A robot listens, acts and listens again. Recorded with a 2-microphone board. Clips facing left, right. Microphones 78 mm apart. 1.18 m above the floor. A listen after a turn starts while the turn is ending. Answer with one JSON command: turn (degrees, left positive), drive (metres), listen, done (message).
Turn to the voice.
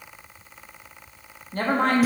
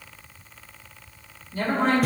{"turn": 55}
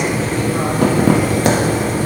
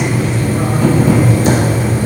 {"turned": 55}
{"listen": true}
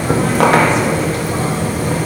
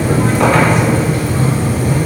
{"listen": true}
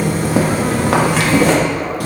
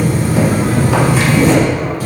{"done": "I heard a woman speaking, but can't make it out now. It was about straight ahead or 70° left."}